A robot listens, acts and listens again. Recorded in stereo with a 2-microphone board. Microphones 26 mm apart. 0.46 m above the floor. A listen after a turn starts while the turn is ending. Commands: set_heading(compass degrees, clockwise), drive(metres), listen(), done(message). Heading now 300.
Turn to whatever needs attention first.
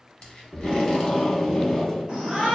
set_heading(340)
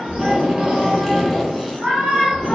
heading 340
set_heading(75)
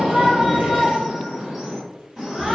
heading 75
set_heading(95)
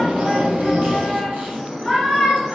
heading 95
done("Facing the shout.")